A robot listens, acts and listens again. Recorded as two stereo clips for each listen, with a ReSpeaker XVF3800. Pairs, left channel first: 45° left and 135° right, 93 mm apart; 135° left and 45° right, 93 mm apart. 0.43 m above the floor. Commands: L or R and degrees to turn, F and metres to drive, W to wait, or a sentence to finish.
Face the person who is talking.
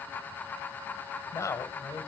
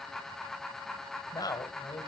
L100
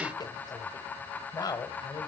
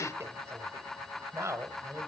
L10
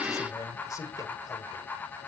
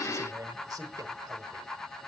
Found it: a man speaking, straight ahead, 1 to 2 m away.